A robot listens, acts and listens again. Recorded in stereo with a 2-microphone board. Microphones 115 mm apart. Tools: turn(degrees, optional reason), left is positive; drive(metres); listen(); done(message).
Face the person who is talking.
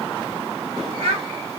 turn(degrees=-90)
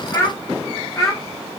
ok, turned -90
turn(degrees=35, reason="So it is at 35° left.")
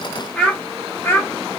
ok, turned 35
turn(degrees=20, reason="The child speaking is now 20° left.")
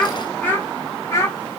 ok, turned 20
turn(degrees=25, reason="The child speaking is now 25° left.")
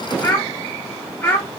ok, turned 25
turn(degrees=15, reason="The child speaking is now 15° left.")
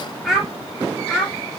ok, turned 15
done("Facing the child speaking, 1 to 2 m away.")